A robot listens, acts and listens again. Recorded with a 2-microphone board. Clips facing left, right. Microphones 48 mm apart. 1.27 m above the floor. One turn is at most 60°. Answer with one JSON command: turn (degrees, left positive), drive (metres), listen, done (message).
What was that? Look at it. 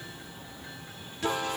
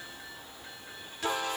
{"listen": true}
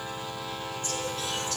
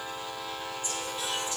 {"listen": true}
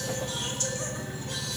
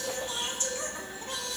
{"turn": -25}
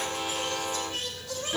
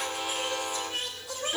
{"turn": -20}
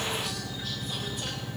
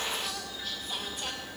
{"listen": true}
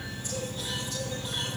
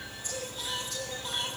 {"listen": true}
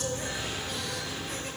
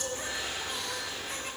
{"done": "Found it: singing, straight ahead, over 4 m away."}